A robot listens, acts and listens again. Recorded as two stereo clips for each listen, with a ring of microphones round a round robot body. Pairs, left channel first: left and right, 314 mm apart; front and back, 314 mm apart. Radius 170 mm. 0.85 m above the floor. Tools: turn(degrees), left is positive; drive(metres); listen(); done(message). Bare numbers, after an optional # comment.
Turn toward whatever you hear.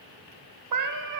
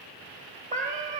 # The cat meowing: 110° right.
turn(-110)
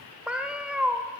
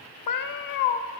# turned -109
done("Found it: a cat meowing, straight ahead, under 1 m away.")